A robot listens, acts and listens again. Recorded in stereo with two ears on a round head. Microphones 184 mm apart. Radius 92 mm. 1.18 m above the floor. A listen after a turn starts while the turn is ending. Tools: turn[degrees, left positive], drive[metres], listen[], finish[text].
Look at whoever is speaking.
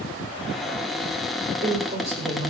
Thought: The woman speaking: about 35° right or 145° right.
Action: turn[-35]
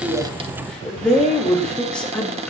Action: finish[Found it: a woman speaking, straight ahead.]